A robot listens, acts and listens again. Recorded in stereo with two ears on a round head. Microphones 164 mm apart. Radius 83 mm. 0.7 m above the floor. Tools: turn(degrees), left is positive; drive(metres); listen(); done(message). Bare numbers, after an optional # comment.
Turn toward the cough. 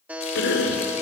# The cough: about 70° left or 110° left.
turn(70)
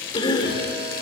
# So it is at 25° left.
turn(25)
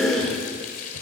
done("Found it: a cough, straight ahead, 2 to 4 m away.")